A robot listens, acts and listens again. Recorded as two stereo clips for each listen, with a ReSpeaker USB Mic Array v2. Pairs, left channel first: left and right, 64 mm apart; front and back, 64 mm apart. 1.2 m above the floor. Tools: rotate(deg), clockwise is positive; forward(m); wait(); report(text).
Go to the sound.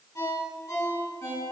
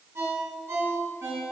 rotate(-135)
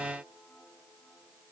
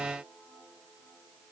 wait()
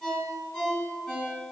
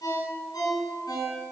forward(1.0)
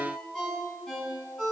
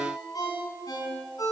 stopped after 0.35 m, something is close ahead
report("Something is in my way. I am facing the ringtone but have not reached it.")